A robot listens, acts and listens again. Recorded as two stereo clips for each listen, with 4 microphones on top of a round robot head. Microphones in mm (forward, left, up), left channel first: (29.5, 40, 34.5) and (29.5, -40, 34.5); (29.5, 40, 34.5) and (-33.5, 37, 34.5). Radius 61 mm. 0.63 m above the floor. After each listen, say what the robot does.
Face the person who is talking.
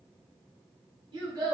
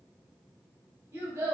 Turn 130° right.
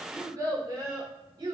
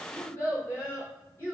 Turn 60° right.
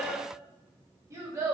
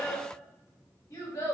Turn 40° right.
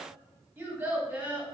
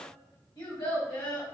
Turn 25° right.
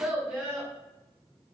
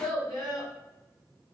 Turn 10° right.
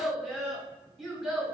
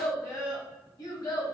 Found it: a child speaking, straight ahead.